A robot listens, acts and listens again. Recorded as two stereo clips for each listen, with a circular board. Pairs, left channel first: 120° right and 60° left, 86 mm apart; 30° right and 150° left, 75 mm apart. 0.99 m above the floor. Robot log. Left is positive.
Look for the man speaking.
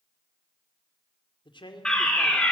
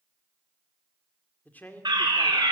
note: The man speaking: 95° right.
cmd yaw -95
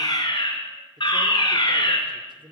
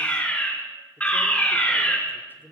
note: The man speaking is now 35° left.
cmd yaw +35
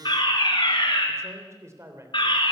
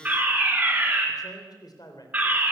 end: Facing the man speaking, 2 to 4 m away.